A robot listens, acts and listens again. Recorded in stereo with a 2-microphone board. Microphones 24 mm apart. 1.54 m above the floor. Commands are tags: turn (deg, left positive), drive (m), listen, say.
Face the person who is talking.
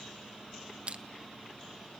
<listen/>
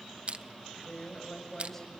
<turn deg="30"/>
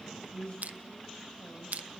<turn deg="140"/>
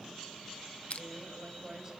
<turn deg="-20"/>
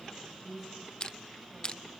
<say>Facing the woman speaking, over 4 m away.</say>